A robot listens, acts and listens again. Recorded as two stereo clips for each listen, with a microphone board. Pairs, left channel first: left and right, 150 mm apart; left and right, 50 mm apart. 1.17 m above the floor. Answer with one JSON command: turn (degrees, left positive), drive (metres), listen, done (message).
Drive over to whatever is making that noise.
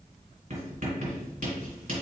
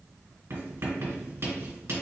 {"turn": -65}
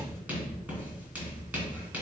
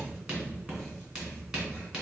{"turn": -10}
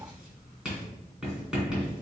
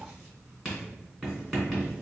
{"drive": 1.0}
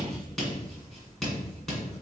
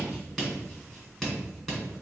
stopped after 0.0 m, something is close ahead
{"done": "Blocked. The writing is further on, straight ahead."}